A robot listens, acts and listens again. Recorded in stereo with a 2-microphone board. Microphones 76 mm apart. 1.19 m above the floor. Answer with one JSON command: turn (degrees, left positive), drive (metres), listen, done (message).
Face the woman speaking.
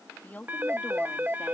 {"turn": 25}
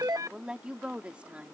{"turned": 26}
{"turn": -15}
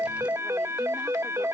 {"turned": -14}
{"listen": true}
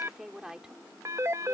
{"done": "Found it: a woman speaking, straight ahead."}